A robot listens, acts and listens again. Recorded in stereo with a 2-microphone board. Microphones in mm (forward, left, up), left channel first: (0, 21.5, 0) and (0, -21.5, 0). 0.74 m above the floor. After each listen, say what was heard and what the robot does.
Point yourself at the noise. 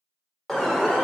Turn 30° left.
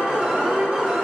So it is at 25° right. Turn 25° right.
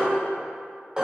The alarm is now 20° right. Turn 20° right.
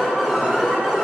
Facing the alarm.